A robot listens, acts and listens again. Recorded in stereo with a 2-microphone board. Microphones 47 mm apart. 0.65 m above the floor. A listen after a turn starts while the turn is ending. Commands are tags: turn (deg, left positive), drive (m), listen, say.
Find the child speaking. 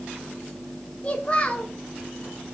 <turn deg="25"/>
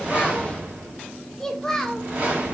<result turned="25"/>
<say>Facing the child speaking, 1 to 2 m away.</say>